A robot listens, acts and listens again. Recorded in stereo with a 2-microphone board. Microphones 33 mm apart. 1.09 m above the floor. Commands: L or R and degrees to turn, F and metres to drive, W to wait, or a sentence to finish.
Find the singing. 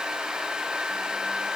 W
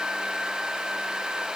W
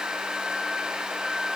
I can't make out singing to turn to.